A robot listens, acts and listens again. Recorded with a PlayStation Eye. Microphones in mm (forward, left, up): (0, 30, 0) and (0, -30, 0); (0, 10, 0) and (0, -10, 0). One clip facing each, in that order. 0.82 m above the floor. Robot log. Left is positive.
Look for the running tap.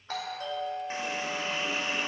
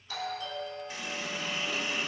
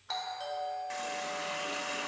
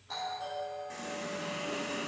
note: The running tap: about 35° left or 145° left.
cmd yaw +35
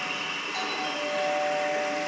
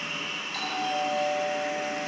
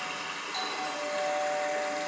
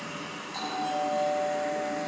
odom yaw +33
note: So it is at 110° left.
cmd yaw +110
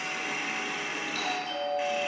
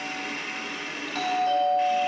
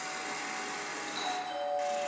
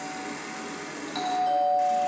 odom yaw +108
end: Found it: a running tap, straight ahead.